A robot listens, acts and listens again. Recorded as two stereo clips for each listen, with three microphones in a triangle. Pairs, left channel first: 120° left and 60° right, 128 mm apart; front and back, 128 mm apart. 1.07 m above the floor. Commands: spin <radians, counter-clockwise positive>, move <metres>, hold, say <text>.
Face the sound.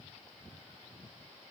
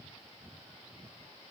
hold
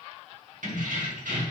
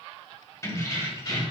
spin -0.96
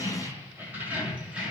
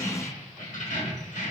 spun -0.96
spin 0.44
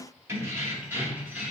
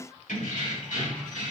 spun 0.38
spin 0.35
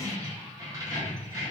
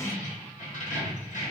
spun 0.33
say Found it: keys jangling, straight ahead, 1 to 2 m away.